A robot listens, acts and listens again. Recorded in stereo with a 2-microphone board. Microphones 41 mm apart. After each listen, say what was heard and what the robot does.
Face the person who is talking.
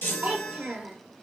The child speaking: about 35° right or 145° right. Turn 35° right.
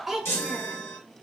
Found it: a child speaking, straight ahead.